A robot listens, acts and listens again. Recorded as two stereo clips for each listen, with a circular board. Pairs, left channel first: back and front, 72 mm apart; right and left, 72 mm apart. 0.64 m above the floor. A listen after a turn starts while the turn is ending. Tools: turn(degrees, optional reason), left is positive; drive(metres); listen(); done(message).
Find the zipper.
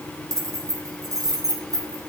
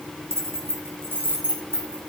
listen()
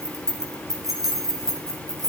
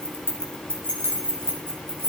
listen()
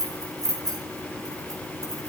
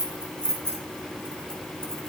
done("I can't make out a zipper to turn to.")